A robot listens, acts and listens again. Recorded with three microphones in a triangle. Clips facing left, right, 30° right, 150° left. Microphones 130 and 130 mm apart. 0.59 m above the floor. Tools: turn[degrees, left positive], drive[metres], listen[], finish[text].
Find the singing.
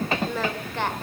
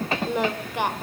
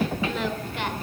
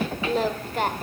Thought: The singing: 165° right.
Action: turn[-165]
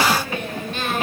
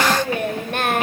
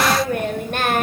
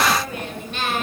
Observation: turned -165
Thought: The singing is now 65° right.
Action: turn[-65]
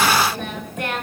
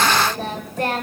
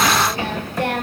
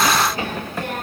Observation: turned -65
Thought: The singing is now 35° right.
Action: turn[-35]
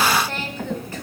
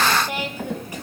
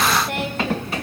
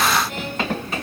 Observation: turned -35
Thought: The singing is now 15° right.
Action: turn[-15]
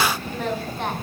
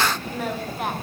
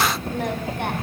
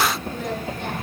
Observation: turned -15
Action: listen[]
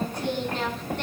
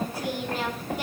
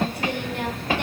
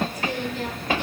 Action: finish[Facing the singing.]